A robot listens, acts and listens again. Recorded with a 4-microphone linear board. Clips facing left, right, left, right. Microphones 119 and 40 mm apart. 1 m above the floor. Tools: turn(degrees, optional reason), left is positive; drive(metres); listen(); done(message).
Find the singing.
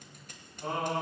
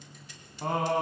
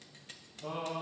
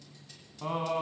turn(degrees=-60, reason="The singing: about 60° right or 120° right.")
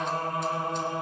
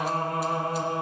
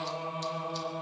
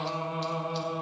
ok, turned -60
turn(degrees=-60, reason="So it is at 60° right.")
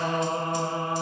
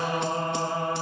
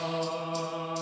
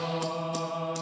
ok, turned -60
turn(degrees=20, reason="The singing is now 20° left.")
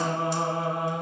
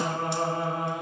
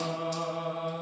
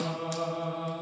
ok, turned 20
done("Facing the singing.")